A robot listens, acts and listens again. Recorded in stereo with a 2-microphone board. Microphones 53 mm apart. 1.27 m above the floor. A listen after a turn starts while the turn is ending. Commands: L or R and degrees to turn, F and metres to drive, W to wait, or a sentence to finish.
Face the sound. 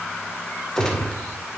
L30
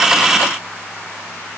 W
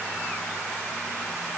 I heard a gunshot, but can't make it out now. It was about 20° right or 140° left.